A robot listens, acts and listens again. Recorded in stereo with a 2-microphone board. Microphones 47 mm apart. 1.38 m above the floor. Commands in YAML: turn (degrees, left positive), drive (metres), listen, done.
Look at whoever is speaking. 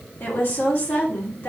turn: 55
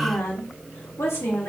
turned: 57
turn: 70
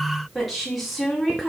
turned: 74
done: "Facing the woman speaking, 2 to 4 m away."